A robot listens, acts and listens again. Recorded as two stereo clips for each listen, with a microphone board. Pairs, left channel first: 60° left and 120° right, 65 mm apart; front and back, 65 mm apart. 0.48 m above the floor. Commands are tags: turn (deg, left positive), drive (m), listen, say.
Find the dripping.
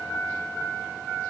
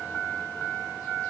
<listen/>
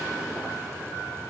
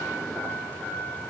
<listen/>
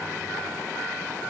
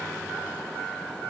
<say>I can't make out dripping.</say>